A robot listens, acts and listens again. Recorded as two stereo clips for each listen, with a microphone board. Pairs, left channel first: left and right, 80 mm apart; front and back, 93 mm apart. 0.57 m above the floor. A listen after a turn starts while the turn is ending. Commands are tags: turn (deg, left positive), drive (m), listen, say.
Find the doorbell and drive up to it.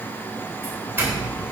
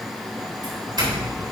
<turn deg="-150"/>
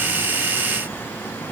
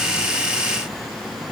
<listen/>
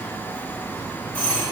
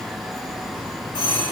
<turn deg="15"/>
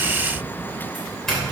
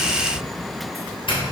<drive m="1.0"/>
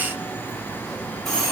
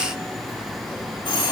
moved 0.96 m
<drive m="1.0"/>
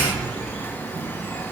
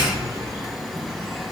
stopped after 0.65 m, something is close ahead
<turn deg="10"/>
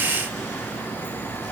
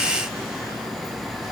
<listen/>
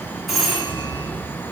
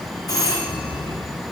<say>I am next to the doorbell.</say>